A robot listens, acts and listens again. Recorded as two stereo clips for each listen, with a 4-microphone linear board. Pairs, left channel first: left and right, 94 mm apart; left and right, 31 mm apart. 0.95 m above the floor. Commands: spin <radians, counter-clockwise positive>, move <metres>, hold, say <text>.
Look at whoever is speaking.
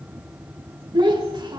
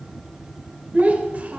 spin -0.87
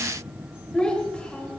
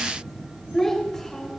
spin 0.26
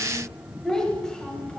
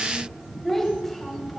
spin 0.17
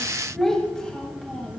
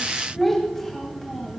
spin 0.17
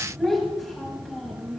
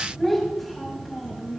say Found it: a child speaking, straight ahead.